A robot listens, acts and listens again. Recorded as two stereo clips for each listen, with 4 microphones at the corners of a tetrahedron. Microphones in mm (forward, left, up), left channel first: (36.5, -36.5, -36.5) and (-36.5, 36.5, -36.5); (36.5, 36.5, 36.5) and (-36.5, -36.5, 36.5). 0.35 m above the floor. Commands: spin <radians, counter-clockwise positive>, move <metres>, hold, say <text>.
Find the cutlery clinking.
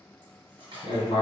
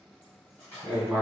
spin 2.01
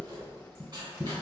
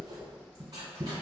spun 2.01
hold
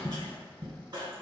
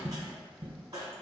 hold
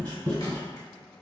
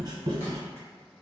say Facing where the cutlery clinking came from. I can't hear it now.